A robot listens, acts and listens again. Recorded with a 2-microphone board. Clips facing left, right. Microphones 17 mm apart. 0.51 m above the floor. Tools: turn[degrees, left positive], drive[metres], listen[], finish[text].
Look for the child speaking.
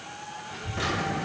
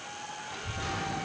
Thought: The child speaking: about 35° right or 145° right.
Action: turn[-35]
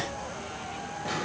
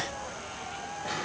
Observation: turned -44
Thought: So it is at 10° left.
Action: turn[10]
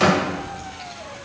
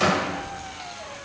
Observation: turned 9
Action: finish[Facing the child speaking, over 4 m away.]